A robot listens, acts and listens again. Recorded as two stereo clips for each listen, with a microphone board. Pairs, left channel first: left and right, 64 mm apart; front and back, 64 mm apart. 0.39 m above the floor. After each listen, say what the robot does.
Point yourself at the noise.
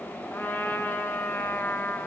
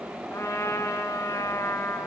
Turn 40° left.
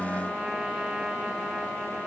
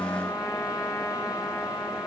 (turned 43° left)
Found it: a trumpet, straight ahead.